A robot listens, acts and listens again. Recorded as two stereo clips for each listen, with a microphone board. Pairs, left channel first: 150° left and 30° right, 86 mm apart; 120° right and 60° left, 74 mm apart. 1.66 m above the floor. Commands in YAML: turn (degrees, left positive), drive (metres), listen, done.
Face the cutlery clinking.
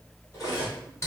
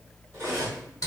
turn: 105
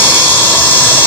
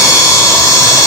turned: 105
listen: true
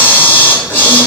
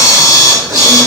listen: true
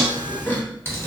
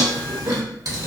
done: "Facing where the cutlery clinking came from. I can't hear it now."